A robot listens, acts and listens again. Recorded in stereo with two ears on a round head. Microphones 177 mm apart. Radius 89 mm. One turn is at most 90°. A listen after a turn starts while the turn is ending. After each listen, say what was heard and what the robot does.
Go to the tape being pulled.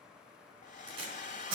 The tape being pulled: about 30° right or 150° right. Turn 30° right.
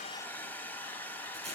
Keep listening.
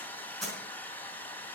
Drive 1.0 m forward.
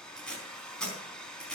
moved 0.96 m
Drive 1.0 m forward.
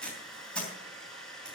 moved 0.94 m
Drive 1.0 m forward.
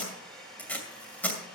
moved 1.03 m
The tape being pulled is now 10° left. Turn 10° left.
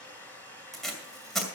Drive 1.0 m forward.
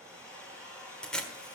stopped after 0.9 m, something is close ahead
I am next to the tape being pulled.